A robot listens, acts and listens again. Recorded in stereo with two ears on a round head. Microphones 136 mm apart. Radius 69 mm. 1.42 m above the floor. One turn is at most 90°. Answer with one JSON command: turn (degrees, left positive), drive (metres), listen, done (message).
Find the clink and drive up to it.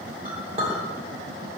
{"turn": -35}
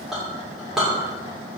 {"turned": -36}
{"drive": 1.0}
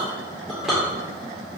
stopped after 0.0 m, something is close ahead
{"done": "Something is in my way. I am facing the clink but have not reached it."}